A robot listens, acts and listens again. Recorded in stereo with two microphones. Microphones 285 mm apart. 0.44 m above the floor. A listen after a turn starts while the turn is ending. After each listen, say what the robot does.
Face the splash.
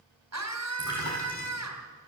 Turn 90° left.
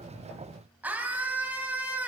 I heard a splash from this way, but can't make it out now.